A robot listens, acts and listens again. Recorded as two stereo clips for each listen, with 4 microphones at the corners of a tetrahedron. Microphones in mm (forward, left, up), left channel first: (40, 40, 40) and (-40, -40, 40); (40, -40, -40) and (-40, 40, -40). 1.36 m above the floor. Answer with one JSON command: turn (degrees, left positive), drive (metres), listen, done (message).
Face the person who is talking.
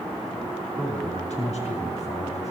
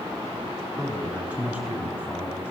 {"turn": 55}
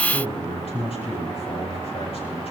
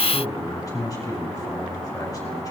{"turn": 15}
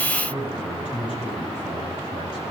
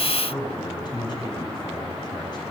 {"done": "Facing the man speaking, over 4 m away."}